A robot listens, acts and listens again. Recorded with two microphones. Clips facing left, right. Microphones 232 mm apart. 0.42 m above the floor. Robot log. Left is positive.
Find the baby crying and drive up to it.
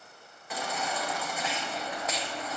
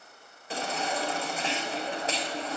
note: The baby crying: about 30° right or 150° right.
cmd yaw -30
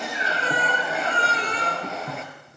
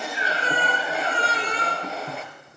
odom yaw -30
cmd fwd 1.0
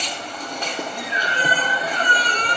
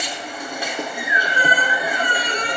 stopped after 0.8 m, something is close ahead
note: The baby crying is now 10° right.
cmd yaw -10
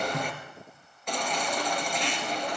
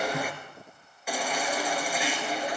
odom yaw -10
end: Blocked. The baby crying is further on, straight ahead.